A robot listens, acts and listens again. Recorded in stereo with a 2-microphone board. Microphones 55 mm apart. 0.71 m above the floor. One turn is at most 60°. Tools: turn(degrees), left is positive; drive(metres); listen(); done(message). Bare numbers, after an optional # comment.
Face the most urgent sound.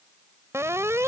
# The alarm: about 55° right or 125° right.
turn(-55)
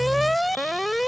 done("Found it: an alarm, straight ahead.")